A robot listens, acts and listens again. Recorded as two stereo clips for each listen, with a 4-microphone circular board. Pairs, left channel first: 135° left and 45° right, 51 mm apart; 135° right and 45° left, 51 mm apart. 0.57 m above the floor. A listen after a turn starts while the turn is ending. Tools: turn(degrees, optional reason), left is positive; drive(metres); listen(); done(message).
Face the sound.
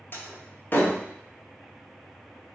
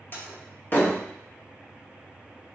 turn(degrees=180, reason="The door slam: straight behind.")
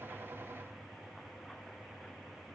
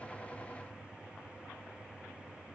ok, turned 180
done("Facing where the door slam came from. I can't hear it now.")